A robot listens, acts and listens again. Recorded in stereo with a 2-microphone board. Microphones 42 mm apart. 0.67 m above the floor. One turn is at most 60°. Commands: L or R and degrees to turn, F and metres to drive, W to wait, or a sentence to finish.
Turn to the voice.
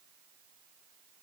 W
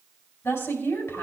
L60
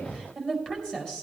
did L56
L25
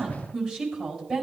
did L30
Found it: a woman speaking, straight ahead, over 4 m away.